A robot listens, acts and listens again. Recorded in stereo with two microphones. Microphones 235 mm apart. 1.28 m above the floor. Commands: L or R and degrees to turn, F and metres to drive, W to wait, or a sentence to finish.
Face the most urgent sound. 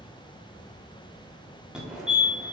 R30
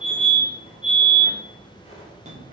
R145
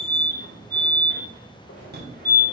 R50
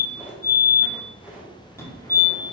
L10
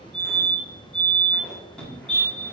Found it: a fire alarm, straight ahead, 1 to 2 m away.